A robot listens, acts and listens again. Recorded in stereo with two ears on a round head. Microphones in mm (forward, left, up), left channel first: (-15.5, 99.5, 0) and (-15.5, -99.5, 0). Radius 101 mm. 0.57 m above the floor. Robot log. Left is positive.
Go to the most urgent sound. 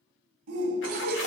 cmd yaw -90
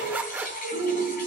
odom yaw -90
note: So it is at 10° right.
cmd yaw -10
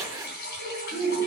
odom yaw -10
cmd fwd 1.0
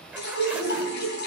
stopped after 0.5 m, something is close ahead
note: The shout is now 10° right.
cmd yaw -10
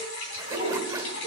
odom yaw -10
cmd idle
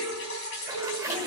end: Blocked. The shout is further on, straight ahead.